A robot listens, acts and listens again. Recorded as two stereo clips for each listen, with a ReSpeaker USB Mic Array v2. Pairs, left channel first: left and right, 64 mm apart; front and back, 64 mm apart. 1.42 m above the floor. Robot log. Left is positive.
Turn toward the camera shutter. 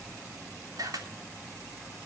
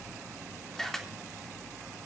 note: The camera shutter: 85° right.
cmd yaw -85
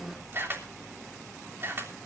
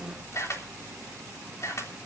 note: The camera shutter is now 40° right.
cmd yaw -40
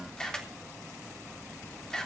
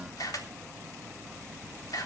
note: The camera shutter is now 10° left.
cmd yaw +10
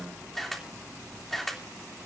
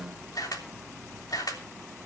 end: Facing the camera shutter, 2 to 4 m away.